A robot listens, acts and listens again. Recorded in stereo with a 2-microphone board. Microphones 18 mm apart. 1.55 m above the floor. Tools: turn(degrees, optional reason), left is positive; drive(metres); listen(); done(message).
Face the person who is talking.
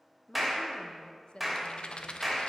turn(degrees=60, reason="The woman speaking: about 60° left or 120° left.")
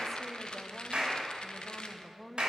done("Facing the woman speaking.")